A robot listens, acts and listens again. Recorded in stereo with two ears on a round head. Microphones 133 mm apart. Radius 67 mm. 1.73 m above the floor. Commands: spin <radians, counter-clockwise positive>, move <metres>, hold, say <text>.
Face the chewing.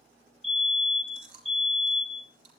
spin -1.13
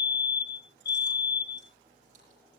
hold
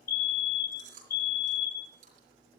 spin -0.87
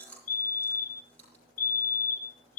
spin 0.17
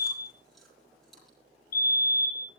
hold
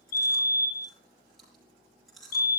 say Facing the chewing.